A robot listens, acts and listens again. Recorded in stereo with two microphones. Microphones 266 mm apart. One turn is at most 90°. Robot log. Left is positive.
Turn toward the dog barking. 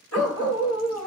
note: The dog barking: about 60° left or 120° left.
cmd yaw +60
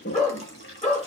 note: So it is at 25° left.
cmd yaw +25
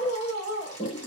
note: The dog barking is now 10° left.
cmd yaw +10
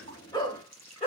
note: The dog barking is now 20° left.
cmd yaw +20
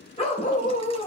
note: The dog barking is now 25° left.
cmd yaw +25
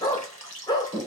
note: The dog barking is now 15° left.
cmd yaw +15
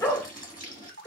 note: The dog barking is now 10° left.
cmd yaw +10
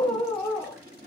end: Facing the dog barking, 1 to 2 m away.